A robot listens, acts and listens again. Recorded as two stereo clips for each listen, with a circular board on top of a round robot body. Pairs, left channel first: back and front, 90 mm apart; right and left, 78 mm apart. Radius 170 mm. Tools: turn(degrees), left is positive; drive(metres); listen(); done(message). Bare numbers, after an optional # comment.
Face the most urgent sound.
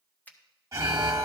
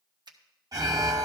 # The alarm: 55° left.
turn(55)
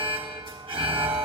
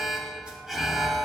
done("Facing the alarm.")